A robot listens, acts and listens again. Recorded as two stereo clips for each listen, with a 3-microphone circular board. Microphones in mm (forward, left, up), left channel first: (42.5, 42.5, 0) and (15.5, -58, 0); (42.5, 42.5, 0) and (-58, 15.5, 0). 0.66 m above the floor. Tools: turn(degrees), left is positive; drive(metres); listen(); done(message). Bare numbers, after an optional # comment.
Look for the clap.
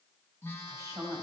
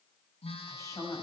listen()
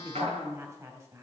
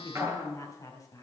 # The clap: 105° right.
turn(-105)
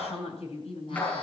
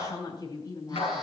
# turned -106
done("Facing the clap, over 4 m away.")